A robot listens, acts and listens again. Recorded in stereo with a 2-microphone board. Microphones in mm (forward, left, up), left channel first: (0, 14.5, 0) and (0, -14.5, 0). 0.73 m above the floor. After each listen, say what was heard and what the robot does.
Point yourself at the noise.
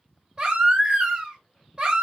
The baby crying: about 35° right or 145° right. Turn 35° right.
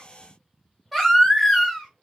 Found it: a baby crying, straight ahead.